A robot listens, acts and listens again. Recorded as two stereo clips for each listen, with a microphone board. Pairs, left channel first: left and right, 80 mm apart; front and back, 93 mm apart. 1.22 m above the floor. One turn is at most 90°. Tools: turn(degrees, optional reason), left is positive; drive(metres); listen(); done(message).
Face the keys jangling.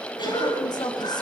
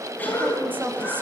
listen()
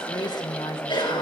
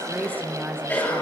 listen()
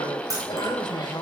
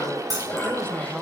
turn(degrees=-90, reason="The keys jangling: 135° right.")
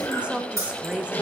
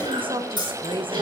turn(degrees=-35, reason="The keys jangling is now 35° right.")
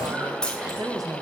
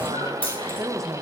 turn(degrees=10, reason="The keys jangling is now 10° left.")
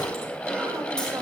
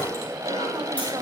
listen()
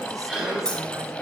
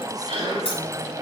turn(degrees=10, reason="The keys jangling is now 10° left.")
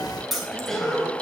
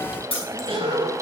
done("Facing the keys jangling.")